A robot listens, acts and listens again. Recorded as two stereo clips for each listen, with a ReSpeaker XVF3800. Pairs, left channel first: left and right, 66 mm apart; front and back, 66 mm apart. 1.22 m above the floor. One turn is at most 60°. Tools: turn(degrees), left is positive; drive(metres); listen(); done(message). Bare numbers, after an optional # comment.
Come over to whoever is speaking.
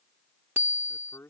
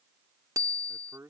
# The man speaking: 135° left.
turn(60)
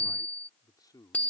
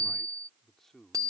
# The man speaking is now 85° left.
turn(60)
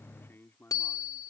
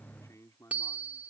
# The man speaking is now 35° left.
turn(35)
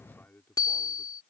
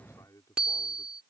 # The man speaking is now 30° left.
turn(30)
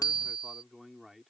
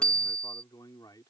drive(1.0)
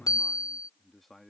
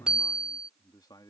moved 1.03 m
drive(1.0)
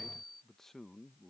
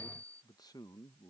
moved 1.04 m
drive(1.0)
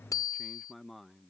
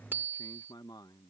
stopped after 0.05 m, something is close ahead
done("I am next to the man speaking.")